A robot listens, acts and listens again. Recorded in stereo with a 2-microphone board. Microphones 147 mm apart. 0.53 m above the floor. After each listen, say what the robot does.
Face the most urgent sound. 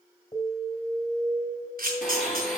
Turn 35° left.
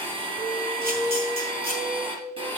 Facing the alarm.